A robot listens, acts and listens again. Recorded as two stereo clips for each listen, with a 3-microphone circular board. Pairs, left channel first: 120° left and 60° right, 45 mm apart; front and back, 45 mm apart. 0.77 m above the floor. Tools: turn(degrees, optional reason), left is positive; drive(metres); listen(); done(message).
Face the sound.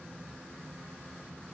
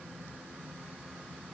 listen()
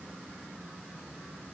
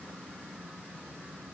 listen()
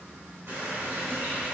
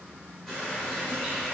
turn(degrees=-80, reason="The running tap: 80° right.")
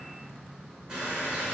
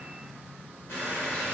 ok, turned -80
turn(degrees=15, reason="The running tap is now 15° left.")
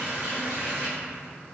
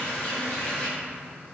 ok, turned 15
done("Found it: a running tap, straight ahead, 1 to 2 m away.")